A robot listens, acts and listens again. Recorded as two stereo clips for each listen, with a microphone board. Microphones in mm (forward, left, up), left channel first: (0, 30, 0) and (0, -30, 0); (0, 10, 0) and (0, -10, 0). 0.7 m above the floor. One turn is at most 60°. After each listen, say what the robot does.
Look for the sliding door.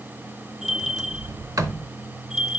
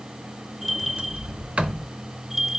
Turn 60° right.
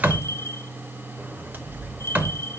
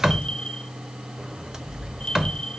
Turn 35° right.
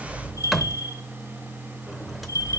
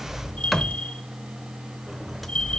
Facing the sliding door, under 1 m away.